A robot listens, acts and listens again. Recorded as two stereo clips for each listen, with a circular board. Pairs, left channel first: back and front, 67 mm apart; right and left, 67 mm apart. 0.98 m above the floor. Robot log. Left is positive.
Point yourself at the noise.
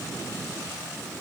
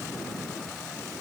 cmd idle
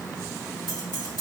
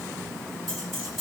note: The keys jangling: 175° right.
cmd yaw -175
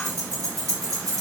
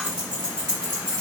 note: The keys jangling is now 10° left.
cmd yaw +10
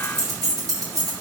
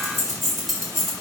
end: Found it: keys jangling, straight ahead, 2 to 4 m away.